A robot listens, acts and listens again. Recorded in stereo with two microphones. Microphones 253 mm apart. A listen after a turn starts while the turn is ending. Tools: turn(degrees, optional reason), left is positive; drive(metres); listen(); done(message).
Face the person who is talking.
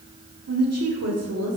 turn(degrees=-90)
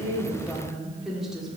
done("Facing the woman speaking.")